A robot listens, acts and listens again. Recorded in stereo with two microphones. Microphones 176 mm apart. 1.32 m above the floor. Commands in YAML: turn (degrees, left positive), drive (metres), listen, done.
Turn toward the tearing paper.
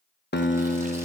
listen: true
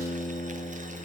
listen: true
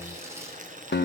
done: "I can't make out tearing paper, only boiling and a guitar."